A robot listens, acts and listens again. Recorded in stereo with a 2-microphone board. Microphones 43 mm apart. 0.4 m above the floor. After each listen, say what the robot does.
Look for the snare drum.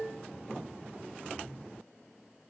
Keep listening.
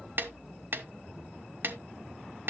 Turn 50° right.
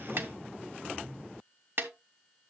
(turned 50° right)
Turn 65° right.
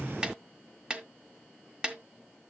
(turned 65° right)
Turn 25° right.
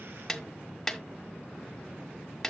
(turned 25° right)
Turn 10° left.
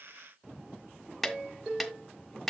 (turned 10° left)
Found it: a snare drum, straight ahead.